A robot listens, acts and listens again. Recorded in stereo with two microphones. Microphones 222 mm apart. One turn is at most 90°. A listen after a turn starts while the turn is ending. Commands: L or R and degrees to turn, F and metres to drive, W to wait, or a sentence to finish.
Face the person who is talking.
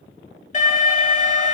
W
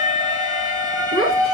L90
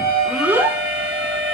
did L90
R10
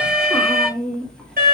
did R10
Found it: a child speaking, straight ahead.